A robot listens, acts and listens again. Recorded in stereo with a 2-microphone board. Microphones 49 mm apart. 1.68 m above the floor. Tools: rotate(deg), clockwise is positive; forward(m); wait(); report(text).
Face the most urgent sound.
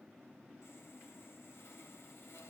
wait()
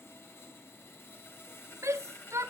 rotate(90)
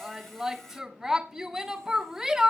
report("Facing the shout.")